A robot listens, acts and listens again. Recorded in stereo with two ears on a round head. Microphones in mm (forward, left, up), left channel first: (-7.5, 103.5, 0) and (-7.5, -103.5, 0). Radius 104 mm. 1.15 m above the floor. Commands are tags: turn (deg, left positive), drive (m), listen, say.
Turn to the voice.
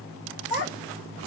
<turn deg="30"/>
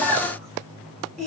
<say>Found it: a child speaking, straight ahead, 1 to 2 m away.</say>